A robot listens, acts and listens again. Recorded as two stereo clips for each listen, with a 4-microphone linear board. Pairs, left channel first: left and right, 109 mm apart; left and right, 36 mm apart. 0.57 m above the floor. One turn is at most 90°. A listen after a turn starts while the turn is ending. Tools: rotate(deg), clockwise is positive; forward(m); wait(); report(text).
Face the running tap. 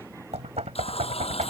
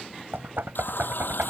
rotate(-65)
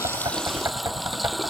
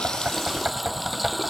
report("Facing the running tap.")